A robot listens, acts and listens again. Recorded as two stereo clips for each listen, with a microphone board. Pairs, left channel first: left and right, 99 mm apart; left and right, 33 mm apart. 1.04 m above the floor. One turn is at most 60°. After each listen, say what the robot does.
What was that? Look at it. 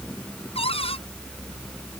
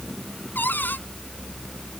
Turn 60° left.
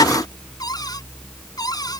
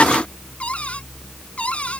Turn 40° left.
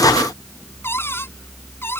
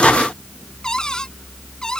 Turn 25° left.
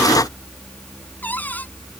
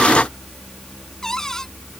Keep listening.
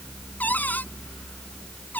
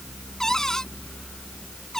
Turn 15° left.
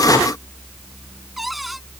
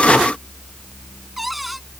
Keep listening.
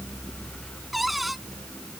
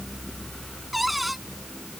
Found it: a cupboard door, straight ahead.